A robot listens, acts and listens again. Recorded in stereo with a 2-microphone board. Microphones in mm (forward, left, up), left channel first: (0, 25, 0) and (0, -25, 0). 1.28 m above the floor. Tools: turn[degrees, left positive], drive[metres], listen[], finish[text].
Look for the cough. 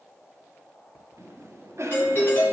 Thought: The cough: about 65° right or 115° right.
Action: turn[-65]
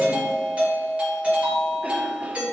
Action: listen[]
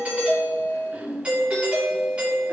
Thought: So it is at 30° right.
Action: turn[-30]
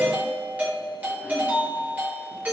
Action: listen[]
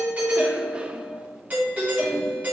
Thought: The cough is now 25° right.
Action: turn[-25]
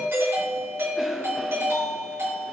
Action: listen[]
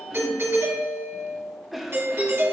Action: finish[Facing the cough, 1 to 2 m away.]